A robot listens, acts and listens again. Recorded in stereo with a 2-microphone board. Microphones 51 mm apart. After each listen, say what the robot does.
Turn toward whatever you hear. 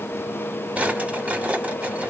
Turn 25° right.
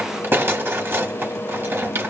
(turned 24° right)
Turn 130° right.
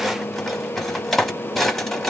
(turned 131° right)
Found it: a drawer, straight ahead, under 1 m away.